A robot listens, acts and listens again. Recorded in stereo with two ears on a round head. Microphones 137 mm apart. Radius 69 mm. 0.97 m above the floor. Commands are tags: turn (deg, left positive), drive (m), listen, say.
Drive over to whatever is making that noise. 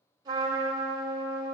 <turn deg="-25"/>
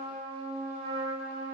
<turn deg="-130"/>
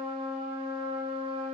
<turn deg="-40"/>
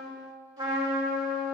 <turn deg="-30"/>
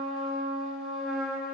<drive m="1.0"/>
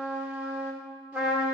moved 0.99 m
<turn deg="-10"/>
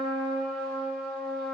<drive m="1.0"/>
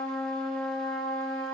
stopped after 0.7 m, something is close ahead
<say>I am next to the trumpet.</say>